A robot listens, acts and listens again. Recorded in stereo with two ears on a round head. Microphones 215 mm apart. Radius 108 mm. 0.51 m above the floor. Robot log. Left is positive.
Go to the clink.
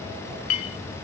note: The clink: about 70° left or 110° left.
cmd yaw +70
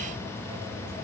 cmd idle
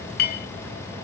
note: So it is at 40° left.
cmd yaw +40
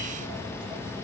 cmd idle
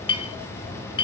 note: The clink is now 20° left.
cmd yaw +20
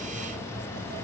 cmd idle
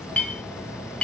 cmd fwd 1.0
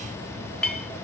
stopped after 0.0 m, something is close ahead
end: Blocked. The clink is further on, straight ahead.